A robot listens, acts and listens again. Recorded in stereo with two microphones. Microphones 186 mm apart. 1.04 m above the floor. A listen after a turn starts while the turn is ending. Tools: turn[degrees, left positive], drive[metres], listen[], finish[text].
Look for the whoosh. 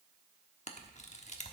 Action: listen[]
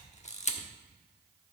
Action: listen[]
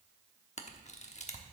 Action: finish[I can't make out a whoosh to turn to.]